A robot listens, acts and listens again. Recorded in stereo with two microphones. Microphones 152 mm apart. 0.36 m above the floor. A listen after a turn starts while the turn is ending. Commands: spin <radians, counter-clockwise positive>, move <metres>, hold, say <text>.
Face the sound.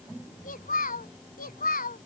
spin 1.31
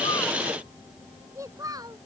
spin -0.44
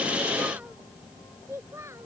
spin -0.35
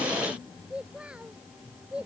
say Facing the child speaking.